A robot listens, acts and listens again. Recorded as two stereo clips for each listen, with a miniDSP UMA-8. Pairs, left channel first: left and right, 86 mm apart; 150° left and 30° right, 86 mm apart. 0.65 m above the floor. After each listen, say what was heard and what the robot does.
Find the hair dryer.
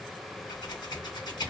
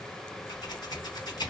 Keep listening.
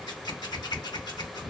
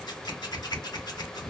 Keep listening.
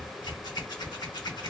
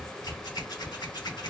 I can't make out a hair dryer, only scissors.